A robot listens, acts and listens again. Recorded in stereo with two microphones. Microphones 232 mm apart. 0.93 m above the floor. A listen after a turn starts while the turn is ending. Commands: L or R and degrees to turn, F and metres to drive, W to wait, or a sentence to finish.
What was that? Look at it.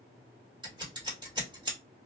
R20
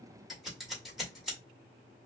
Found it: scissors, straight ahead, 1 to 2 m away.